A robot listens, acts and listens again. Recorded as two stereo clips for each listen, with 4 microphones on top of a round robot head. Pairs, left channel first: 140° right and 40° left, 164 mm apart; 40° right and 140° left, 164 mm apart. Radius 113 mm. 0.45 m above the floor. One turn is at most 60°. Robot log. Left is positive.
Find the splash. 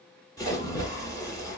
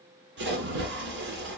note: The splash: 150° left.
cmd yaw +60
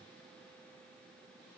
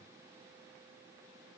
note: Nothing new. It was at 90° left.
cmd yaw +60
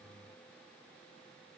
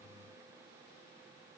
note: Nothing new. It was at 30° left.
cmd yaw +30
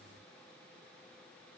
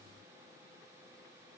end: Facing where the splash came from. I can't hear it now.